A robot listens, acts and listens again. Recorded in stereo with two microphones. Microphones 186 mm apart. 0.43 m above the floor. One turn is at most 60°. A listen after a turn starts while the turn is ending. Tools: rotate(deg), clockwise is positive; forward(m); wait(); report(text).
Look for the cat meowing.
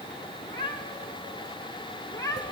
rotate(-20)
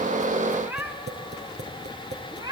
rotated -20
rotate(25)
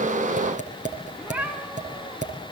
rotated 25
rotate(10)
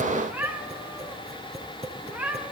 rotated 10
rotate(10)
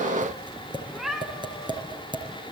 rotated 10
report("Found it: a cat meowing, straight ahead, 2 to 4 m away.")